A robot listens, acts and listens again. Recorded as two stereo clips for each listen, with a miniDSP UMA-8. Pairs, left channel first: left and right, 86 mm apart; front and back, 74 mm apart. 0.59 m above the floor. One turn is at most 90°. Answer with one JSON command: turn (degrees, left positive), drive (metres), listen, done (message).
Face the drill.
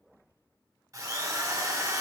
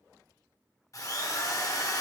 {"turn": -40}
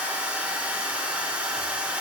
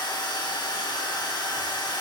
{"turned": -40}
{"turn": -15}
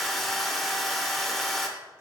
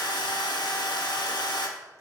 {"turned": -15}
{"done": "Facing the drill, under 1 m away."}